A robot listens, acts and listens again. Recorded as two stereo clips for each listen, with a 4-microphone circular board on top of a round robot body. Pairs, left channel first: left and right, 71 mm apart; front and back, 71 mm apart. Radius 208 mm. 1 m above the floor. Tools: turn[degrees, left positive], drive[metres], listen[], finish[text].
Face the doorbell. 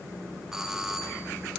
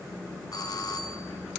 Thought: The doorbell: 10° right.
Action: turn[-10]
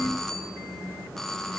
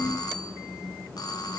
Action: finish[Found it: a doorbell, straight ahead.]